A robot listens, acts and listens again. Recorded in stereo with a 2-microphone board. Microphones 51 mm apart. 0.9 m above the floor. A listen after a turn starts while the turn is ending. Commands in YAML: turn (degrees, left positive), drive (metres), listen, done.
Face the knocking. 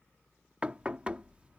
turn: -25
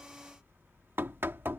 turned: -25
turn: -130
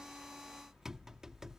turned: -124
turn: -10
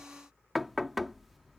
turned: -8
done: "Found it: knocking, straight ahead."